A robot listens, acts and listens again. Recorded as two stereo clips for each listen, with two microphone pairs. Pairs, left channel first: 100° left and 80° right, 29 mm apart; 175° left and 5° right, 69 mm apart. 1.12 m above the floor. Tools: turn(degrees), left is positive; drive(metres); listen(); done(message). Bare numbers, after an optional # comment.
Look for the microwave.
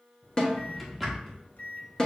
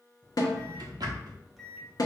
# The microwave: 85° left.
turn(85)
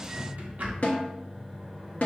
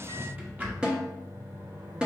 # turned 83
done("Found it: a microwave, straight ahead, under 1 m away.")